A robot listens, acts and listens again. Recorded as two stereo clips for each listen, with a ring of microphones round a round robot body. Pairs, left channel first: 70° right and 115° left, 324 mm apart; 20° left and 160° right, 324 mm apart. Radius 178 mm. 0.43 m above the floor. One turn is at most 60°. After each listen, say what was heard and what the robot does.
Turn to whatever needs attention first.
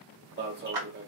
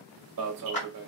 The alarm: 170° left. Turn 60° left.
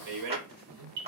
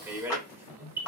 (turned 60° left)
The alarm is now 120° left. Turn 60° left.
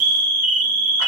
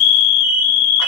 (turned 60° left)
The alarm is now 70° left. Turn 60° left.
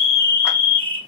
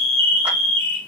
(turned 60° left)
Found it: an alarm, straight ahead.